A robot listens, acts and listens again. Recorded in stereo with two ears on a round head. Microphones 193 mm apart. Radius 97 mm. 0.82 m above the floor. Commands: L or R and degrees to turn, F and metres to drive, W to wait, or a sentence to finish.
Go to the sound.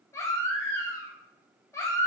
L30
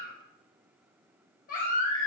L135
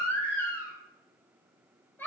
L10
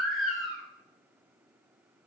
F1.0
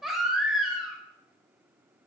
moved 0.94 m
F1.0
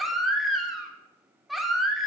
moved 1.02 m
F1.0
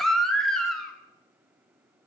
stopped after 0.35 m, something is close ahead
Arrived at the baby crying, straight ahead.